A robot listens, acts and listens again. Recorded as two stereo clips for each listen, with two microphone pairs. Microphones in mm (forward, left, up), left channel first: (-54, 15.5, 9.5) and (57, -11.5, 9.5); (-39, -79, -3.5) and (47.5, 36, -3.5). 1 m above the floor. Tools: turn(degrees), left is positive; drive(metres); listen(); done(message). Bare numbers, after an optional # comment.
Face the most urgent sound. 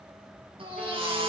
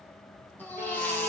# The baby crying: 50° right.
turn(-50)
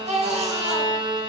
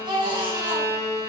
done("Found it: a baby crying, straight ahead.")